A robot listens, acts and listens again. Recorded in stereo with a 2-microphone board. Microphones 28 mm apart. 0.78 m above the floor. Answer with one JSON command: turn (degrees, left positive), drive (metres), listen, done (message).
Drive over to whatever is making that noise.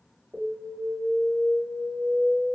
{"turn": -65}
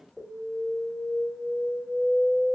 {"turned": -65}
{"turn": -35}
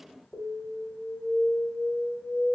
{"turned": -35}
{"turn": -10}
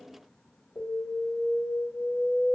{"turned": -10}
{"drive": 1.0}
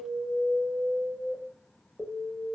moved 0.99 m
{"drive": 1.0}
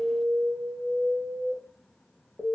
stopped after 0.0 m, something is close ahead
{"turn": -15}
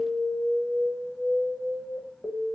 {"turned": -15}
{"done": "Arrived at the alarm, straight ahead."}